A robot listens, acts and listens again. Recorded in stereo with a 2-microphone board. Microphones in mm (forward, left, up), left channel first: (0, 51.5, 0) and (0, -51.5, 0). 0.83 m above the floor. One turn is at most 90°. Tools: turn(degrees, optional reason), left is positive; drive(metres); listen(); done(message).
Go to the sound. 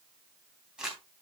turn(degrees=-30)
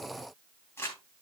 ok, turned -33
turn(degrees=25, reason="So it is at 25° left.")
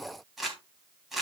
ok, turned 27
drive(metres=1.0)
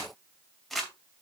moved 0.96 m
drive(metres=1.0)
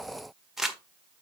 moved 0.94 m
drive(metres=1.0)
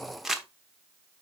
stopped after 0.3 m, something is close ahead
done("I am next to the crumpling.")